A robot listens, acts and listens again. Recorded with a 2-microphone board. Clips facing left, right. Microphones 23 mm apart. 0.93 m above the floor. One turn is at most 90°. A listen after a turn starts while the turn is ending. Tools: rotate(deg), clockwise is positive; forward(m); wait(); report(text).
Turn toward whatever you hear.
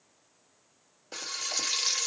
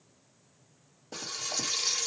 rotate(-45)
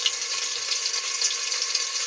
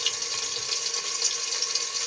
rotate(-85)
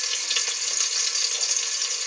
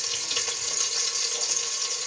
rotate(-35)
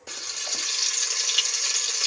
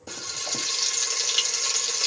report("Found it: frying, straight ahead.")